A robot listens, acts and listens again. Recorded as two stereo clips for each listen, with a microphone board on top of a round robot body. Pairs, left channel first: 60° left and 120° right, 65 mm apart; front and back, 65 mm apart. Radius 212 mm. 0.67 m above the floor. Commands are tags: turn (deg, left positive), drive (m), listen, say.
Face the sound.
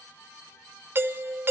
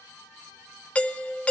<turn deg="-70"/>
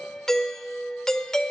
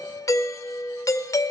<turn deg="-20"/>
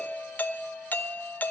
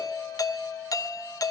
<say>Found it: a doorbell, straight ahead.</say>